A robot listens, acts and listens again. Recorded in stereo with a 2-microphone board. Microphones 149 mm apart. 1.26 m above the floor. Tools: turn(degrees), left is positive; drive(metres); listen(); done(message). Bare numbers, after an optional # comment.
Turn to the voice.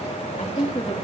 # The woman speaking: about 40° left or 140° left.
turn(40)
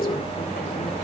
listen()
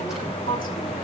# So it is at 110° left.
turn(110)
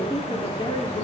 # The woman speaking is now 35° left.
turn(35)
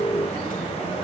listen()
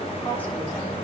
# The woman speaking is now 10° left.
turn(10)
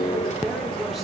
done("Found it: a woman speaking, straight ahead.")